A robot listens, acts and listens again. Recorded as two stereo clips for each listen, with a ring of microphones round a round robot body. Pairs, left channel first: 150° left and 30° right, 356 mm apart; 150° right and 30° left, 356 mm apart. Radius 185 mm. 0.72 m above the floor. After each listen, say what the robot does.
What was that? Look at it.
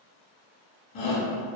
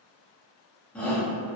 Turn 125° left.
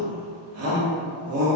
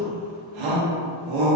Turn 15° left.
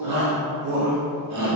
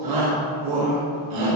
Facing the shout.